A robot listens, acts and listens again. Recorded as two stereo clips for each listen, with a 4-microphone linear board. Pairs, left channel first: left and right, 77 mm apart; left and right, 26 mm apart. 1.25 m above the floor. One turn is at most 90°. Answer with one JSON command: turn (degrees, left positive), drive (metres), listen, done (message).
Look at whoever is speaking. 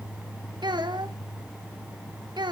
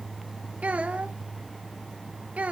{"turn": -70}
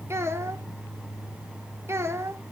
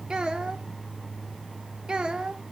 {"turn": -35}
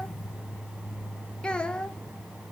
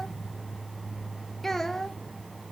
{"turn": 10}
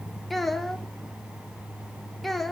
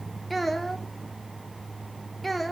{"done": "Facing the child speaking."}